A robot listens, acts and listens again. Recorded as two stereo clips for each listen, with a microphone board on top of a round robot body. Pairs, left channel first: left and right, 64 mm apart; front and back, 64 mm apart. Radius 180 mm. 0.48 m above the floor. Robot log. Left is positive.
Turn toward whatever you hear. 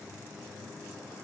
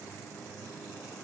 cmd idle
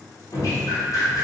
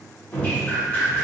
note: The dripping: 65° left.
cmd yaw +65
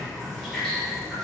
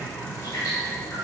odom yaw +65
end: Found it: dripping, straight ahead.